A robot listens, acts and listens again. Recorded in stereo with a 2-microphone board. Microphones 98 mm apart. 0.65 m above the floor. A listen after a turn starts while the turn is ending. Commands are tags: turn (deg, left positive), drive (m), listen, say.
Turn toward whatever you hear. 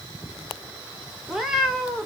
<turn deg="-30"/>
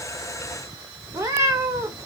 <turn deg="-145"/>
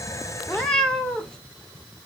<turn deg="10"/>
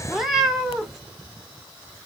<say>Facing the cat meowing.</say>